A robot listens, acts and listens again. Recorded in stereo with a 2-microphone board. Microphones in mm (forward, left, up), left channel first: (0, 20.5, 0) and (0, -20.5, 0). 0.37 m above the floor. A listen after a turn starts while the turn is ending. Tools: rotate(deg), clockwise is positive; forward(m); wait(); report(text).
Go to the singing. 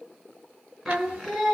rotate(30)
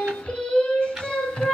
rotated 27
rotate(-25)
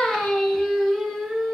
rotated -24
forward(1.0)
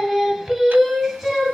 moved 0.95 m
forward(1.0)
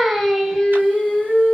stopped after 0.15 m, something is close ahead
report("I am next to the singing.")